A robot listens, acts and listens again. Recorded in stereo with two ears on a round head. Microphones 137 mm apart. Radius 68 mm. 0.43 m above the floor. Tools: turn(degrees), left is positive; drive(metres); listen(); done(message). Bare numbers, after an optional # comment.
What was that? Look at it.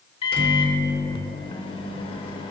# The microwave: about 35° left or 145° left.
turn(35)
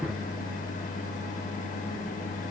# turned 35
# So it is at 100° left.
turn(100)
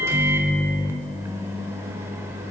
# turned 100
# The microwave is now 20° right.
turn(-20)
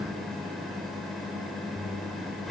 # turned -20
done("Found it: a microwave, straight ahead.")